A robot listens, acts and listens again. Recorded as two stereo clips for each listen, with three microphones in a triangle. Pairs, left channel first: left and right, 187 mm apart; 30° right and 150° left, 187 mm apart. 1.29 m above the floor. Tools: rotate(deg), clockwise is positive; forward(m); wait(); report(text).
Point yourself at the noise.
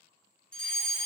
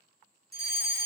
rotate(-175)
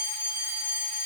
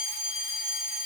report("Facing the fire alarm, 2 to 4 m away.")